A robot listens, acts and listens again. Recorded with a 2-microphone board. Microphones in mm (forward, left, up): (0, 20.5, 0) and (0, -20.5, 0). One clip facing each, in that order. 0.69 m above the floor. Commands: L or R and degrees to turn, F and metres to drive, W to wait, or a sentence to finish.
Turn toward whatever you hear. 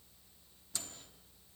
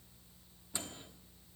R25
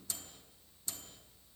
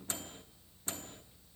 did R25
R130
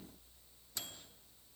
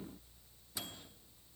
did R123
R10
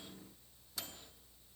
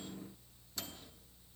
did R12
Facing the microwave.